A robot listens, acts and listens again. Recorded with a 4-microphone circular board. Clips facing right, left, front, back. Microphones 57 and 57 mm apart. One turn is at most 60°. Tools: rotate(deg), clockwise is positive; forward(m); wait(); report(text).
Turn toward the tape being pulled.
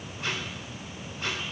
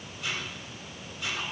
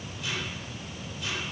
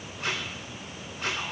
rotate(60)
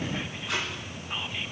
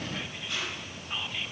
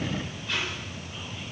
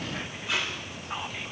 rotate(60)
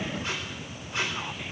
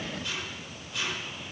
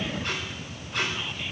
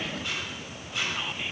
rotate(35)
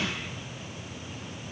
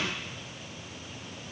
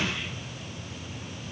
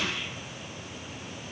wait()
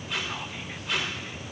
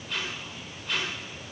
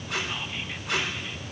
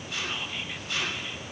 report("Facing the tape being pulled.")